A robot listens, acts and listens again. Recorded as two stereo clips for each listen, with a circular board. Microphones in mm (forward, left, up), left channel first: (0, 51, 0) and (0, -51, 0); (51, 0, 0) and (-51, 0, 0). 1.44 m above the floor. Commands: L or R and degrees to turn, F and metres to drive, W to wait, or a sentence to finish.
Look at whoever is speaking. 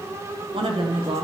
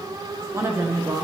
R120
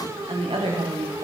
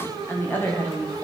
R70
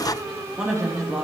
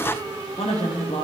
Found it: a woman speaking, straight ahead, 1 to 2 m away.